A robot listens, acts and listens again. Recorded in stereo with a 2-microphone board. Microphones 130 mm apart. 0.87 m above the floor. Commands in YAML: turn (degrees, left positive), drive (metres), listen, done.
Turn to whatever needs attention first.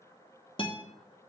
listen: true
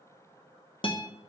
listen: true
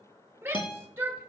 turn: -20
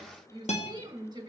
turn: -140
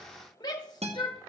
turn: 35
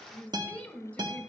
turn: 15
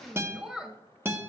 done: "Found it: a shout, straight ahead."